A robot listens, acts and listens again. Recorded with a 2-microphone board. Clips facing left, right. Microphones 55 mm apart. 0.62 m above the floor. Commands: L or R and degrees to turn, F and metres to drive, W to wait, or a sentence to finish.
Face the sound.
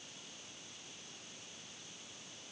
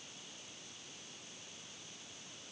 W
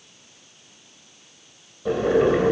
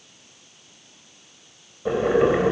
R30
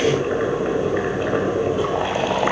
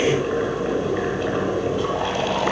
L15
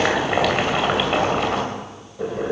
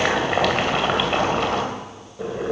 Facing the boiling, 2 to 4 m away.